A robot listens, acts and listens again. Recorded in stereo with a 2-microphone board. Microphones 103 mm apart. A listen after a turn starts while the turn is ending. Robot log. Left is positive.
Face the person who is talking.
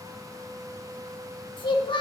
note: The child speaking: about 50° left or 130° left.
cmd yaw +50
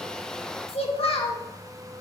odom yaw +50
note: So it is at 75° left.
cmd yaw +75
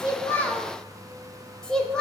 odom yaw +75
note: The child speaking is now 10° left.
cmd yaw +10
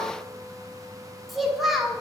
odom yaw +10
end: Found it: a child speaking, straight ahead, 1 to 2 m away.